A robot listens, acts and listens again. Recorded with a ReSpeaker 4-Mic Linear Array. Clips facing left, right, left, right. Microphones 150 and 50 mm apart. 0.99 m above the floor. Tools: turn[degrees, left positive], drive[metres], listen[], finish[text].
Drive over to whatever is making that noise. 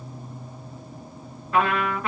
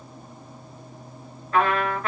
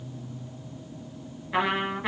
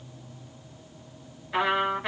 Action: turn[30]
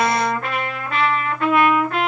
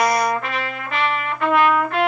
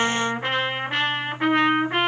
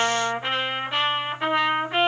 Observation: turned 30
Thought: So it is at 145° left.
Action: turn[145]
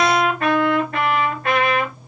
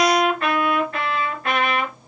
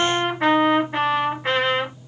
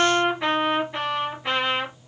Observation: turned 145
Thought: The trumpet is now 50° left.
Action: turn[50]
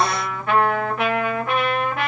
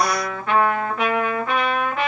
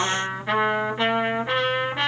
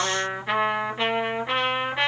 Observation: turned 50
Thought: The trumpet is now 10° left.
Action: turn[10]
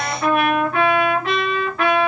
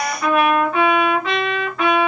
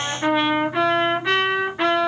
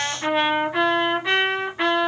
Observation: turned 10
Action: drive[1.0]
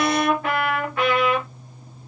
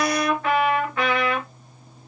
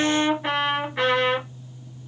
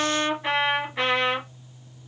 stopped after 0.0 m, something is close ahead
Thought: The trumpet is now 10° left.
Action: turn[10]
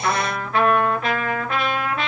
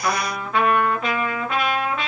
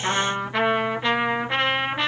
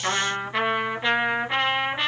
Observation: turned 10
Action: finish[Something is in my way. I am facing the trumpet but have not reached it.]